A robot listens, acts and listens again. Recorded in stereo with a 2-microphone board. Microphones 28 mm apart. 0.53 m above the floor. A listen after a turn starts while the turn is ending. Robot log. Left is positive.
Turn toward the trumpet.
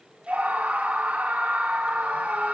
cmd idle
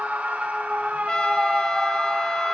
note: The trumpet: about 25° left or 155° left.
cmd yaw +25
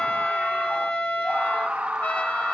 note: So it is at 125° left.
cmd yaw +125
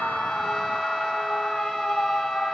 cmd idle
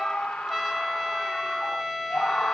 end: Found it: a trumpet, straight ahead.